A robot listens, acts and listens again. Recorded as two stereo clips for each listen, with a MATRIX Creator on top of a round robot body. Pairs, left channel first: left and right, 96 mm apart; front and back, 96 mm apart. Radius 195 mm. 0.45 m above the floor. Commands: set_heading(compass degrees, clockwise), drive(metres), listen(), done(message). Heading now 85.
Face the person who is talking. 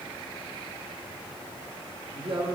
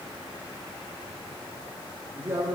set_heading(200)
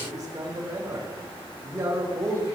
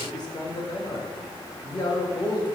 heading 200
set_heading(235)
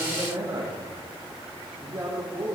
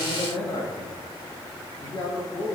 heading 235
set_heading(270)
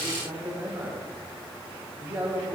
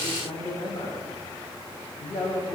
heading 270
set_heading(290)
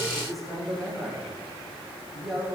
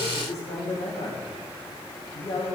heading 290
done("Found it: a man speaking, straight ahead, 2 to 4 m away.")